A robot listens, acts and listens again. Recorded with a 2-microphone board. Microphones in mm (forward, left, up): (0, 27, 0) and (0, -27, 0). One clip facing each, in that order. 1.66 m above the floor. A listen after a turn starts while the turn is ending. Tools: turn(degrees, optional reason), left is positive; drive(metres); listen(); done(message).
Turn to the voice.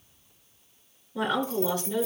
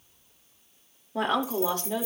turn(degrees=-55, reason="The woman speaking: about 55° right or 125° right.")
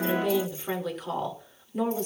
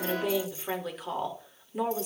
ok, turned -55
done("Facing the woman speaking.")